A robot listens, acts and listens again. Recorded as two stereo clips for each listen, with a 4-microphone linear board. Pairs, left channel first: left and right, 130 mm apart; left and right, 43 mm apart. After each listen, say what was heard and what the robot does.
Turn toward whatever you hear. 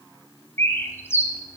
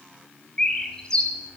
The bird: about 20° left or 160° left. Turn 20° left.
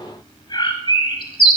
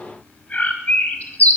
So it is at 140° left. Turn 140° left.
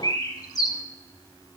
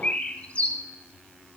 The bird is now 30° left. Turn 30° left.
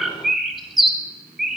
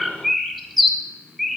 Found it: a bird, straight ahead.